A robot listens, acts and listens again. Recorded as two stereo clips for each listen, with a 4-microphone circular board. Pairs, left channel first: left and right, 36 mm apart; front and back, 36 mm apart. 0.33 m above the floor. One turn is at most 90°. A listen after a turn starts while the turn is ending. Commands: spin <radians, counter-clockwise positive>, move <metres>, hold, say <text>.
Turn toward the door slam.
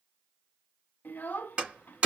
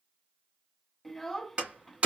spin -1.57
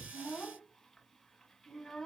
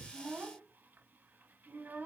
spin -0.79
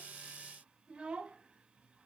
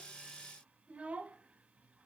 say Facing where the door slam came from. I can't hear it now.